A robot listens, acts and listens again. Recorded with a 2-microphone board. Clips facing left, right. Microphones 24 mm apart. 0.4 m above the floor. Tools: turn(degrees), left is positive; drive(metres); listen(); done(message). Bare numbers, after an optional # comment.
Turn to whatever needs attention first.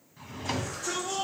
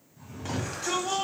# The shout: about 60° right or 120° right.
turn(-60)
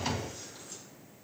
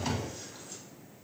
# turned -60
listen()
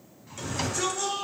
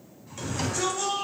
# So it is at 10° right.
turn(-10)
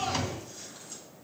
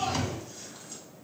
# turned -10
done("Facing the shout.")